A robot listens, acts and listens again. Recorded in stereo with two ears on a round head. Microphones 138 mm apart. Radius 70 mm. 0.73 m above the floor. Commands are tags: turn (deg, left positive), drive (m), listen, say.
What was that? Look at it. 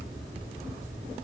<listen/>
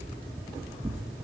<turn deg="-15"/>
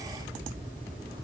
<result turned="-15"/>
<listen/>
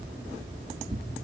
<turn deg="-145"/>
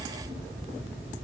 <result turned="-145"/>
<listen/>
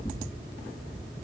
<turn deg="25"/>
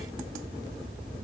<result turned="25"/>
<listen/>
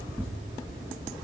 <say>Facing the tearing paper, 2 to 4 m away.</say>